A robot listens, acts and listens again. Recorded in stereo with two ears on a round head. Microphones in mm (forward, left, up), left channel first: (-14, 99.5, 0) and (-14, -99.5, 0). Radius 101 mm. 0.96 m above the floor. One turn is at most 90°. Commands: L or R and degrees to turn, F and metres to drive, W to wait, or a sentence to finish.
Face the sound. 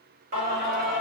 R40
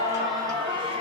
R25
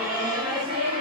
R25
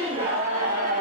R35
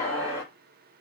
L10
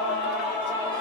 R10
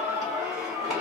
Facing the singing, 1 to 2 m away.